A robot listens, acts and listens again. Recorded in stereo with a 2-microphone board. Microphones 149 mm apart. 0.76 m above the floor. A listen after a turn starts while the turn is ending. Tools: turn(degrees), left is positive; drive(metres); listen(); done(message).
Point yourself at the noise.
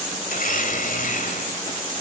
turn(degrees=65)
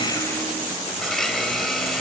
done("Facing the blender.")